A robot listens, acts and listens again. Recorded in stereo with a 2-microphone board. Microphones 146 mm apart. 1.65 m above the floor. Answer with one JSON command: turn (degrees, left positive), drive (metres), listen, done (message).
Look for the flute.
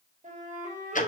{"turn": -60}
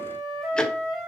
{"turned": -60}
{"done": "Found it: a flute, straight ahead, 2 to 4 m away."}